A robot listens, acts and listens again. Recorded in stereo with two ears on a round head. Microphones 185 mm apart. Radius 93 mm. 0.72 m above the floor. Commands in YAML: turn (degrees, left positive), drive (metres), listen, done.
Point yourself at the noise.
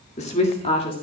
turn: 25
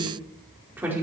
turn: -10
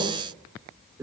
turn: -15
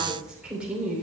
done: "Facing the woman speaking, 2 to 4 m away."